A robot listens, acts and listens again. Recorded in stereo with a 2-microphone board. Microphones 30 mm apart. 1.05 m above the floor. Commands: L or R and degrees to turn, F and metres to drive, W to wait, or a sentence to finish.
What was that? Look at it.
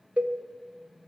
R50
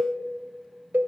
R80
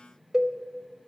R20
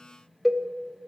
Facing the cowbell, 1 to 2 m away.